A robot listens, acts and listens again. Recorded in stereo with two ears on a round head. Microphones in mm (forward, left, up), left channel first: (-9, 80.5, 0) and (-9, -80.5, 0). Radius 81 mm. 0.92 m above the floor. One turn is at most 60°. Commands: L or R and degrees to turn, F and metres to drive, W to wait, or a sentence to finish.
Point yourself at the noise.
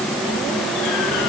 W
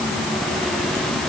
W
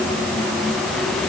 I can't make out anything to turn to.